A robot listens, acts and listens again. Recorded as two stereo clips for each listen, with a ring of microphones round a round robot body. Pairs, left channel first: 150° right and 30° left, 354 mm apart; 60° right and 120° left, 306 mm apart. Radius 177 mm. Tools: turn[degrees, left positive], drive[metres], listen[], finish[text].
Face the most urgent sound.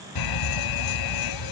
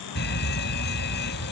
Thought: The fire alarm: 125° right.
Action: turn[-125]
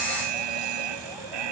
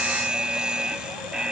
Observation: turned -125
Thought: The fire alarm is now 35° left.
Action: turn[35]
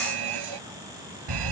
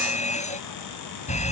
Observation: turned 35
Thought: The fire alarm is now 10° left.
Action: turn[10]
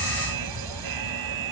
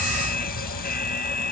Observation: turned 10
Action: finish[Facing the fire alarm.]